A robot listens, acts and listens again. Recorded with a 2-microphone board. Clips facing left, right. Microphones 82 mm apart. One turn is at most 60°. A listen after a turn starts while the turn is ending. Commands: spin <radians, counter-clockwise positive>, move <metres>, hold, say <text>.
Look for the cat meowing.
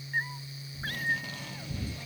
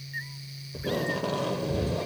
spin 0.87
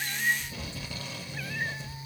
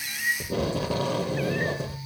hold
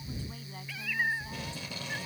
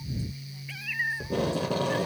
say Facing the cat meowing.